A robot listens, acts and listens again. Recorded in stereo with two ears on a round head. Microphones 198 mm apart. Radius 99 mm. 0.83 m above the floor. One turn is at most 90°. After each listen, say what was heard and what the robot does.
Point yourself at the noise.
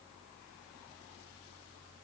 Keep listening.
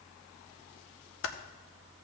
The typing on a keyboard: about 65° left or 115° left. Turn 65° left.
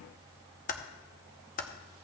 So it is at 40° left. Turn 40° left.
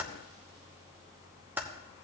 The typing on a keyboard is now 10° right. Turn 10° right.
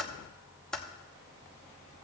Facing the typing on a keyboard, under 1 m away.